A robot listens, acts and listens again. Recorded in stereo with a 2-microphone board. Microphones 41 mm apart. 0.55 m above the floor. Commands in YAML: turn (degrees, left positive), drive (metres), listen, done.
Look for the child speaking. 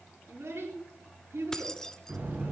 turn: -90
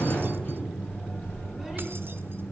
listen: true
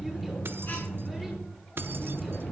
listen: true
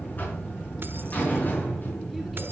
done: "Facing where the child speaking came from. I can't hear it now."